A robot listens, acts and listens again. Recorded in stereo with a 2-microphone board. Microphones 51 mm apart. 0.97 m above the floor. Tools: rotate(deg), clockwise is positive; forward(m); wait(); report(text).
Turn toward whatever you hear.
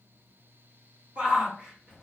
rotate(25)
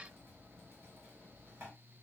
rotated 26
wait()
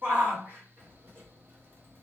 rotate(130)
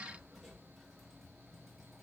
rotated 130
wait()
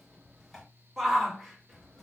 report("Found it: a shout, straight ahead.")